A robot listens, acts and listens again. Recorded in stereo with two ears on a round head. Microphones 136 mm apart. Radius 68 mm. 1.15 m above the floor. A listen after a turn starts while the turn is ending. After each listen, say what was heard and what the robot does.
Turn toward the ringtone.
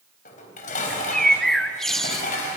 Keep listening.
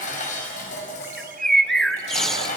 Keep listening.
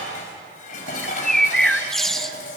I can't make out a ringtone to turn to.